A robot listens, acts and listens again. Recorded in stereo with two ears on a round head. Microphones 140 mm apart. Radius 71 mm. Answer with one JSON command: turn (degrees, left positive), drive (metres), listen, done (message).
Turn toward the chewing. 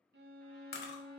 {"turn": 75}
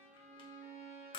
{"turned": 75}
{"turn": 30}
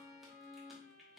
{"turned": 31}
{"listen": true}
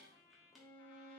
{"done": "Found it: chewing, straight ahead, 1 to 2 m away."}